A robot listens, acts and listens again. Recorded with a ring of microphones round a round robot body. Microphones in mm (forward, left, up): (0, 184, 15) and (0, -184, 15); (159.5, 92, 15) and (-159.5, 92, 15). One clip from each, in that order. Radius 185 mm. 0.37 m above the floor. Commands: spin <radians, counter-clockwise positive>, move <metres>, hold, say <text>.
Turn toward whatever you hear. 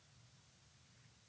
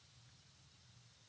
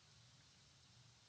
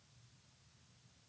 hold
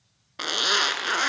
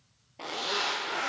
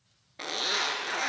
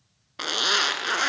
spin 2.09
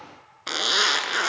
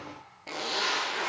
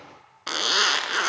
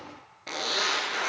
spin 0.79
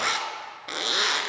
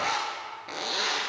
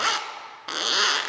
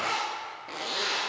spin 0.35
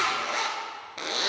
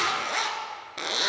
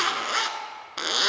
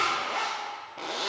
say Facing the zipper, under 1 m away.